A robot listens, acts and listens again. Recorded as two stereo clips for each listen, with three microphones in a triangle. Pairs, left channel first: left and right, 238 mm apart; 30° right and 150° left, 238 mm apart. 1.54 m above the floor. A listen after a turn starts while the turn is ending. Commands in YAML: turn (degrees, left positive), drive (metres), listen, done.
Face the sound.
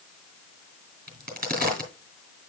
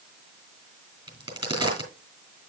turn: -140
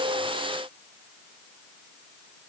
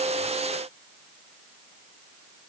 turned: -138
done: "I heard a crack from this way, but can't make it out now."